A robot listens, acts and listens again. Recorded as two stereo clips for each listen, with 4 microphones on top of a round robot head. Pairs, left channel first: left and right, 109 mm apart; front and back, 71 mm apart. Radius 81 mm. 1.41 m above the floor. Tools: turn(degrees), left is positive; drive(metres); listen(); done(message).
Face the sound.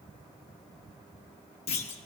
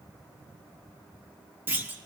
turn(degrees=120)
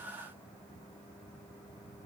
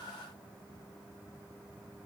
done("I heard a clunk from this way, but can't make it out now.")